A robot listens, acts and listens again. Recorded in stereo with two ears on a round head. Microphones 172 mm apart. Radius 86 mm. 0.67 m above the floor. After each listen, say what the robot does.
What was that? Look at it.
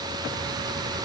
Keep listening.
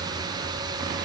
Keep listening.
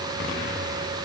I can't make out anything to turn to.